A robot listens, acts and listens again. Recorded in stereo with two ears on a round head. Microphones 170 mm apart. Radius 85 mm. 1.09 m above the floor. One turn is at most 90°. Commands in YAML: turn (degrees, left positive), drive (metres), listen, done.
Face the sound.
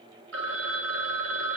turn: -70
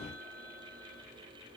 listen: true
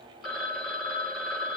done: "Facing the phone ringing."